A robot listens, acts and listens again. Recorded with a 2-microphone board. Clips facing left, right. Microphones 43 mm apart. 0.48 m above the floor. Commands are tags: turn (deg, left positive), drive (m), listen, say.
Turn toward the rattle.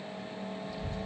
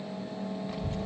<listen/>
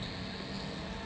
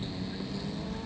<listen/>
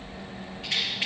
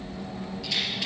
<turn deg="35"/>
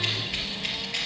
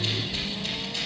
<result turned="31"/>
<listen/>
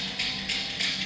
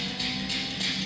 <turn deg="115"/>
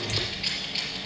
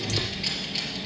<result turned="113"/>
<listen/>
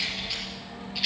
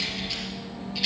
<say>Facing the rattle.</say>